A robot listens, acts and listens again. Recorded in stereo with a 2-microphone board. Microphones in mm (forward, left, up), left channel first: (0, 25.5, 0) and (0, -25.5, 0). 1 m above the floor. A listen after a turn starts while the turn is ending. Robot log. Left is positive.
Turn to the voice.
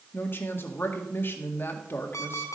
note: The woman speaking: about 45° left or 135° left.
cmd yaw +45
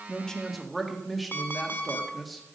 end: Found it: a woman speaking, straight ahead.